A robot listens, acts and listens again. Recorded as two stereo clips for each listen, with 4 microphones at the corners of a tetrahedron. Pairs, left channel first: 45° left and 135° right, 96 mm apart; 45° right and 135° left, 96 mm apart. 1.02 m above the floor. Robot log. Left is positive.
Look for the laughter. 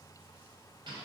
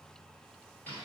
cmd idle
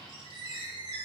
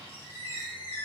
cmd idle
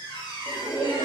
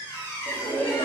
note: The laughter: 95° right.
cmd yaw -95
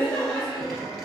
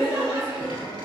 note: The laughter is now 40° right.
cmd yaw -40
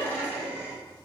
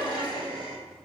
note: The laughter is now 25° right.
cmd yaw -25
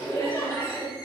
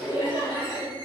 note: The laughter is now 10° right.
cmd yaw -10
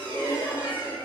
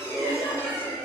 end: Found it: laughter, straight ahead.